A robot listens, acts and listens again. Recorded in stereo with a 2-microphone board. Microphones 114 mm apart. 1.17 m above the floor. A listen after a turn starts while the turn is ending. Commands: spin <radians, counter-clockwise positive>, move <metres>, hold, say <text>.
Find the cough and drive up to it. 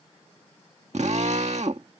hold
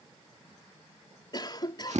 spin 0.70
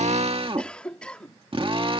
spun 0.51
spin 0.17
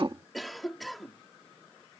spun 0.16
move 1.0
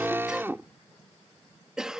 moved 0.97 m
move 1.0
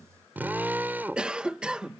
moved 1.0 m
spin -0.17
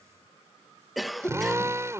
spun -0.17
move 1.0
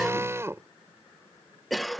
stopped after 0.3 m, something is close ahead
say Arrived at the cough, straight ahead.